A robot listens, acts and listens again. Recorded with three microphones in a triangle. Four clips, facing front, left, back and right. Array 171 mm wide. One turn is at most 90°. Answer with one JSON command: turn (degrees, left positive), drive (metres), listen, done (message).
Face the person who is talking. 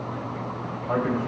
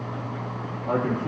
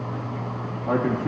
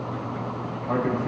{"turn": 90}
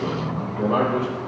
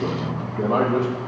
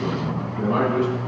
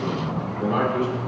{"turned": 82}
{"turn": 90}
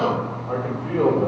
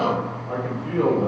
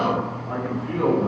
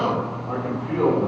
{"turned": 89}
{"done": "Found it: a man speaking, straight ahead, 2 to 4 m away."}